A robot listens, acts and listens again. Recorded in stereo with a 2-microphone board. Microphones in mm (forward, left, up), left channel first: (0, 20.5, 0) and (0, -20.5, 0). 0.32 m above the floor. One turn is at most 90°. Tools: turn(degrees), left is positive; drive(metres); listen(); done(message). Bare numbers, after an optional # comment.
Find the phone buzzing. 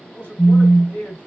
turn(90)
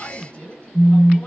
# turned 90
done("Facing the phone buzzing, 1 to 2 m away.")